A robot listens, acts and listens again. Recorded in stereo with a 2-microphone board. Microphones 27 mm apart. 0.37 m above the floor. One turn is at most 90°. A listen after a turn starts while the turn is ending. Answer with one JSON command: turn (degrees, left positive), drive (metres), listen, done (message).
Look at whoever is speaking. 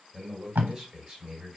{"turn": -20}
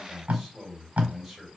{"done": "Found it: a man speaking, straight ahead."}